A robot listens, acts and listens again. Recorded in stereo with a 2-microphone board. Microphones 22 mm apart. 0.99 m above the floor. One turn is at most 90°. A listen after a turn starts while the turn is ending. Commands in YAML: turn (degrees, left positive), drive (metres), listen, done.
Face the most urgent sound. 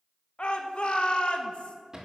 turn: 55
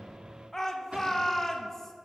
turn: 25
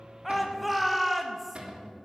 done: "Found it: a shout, straight ahead."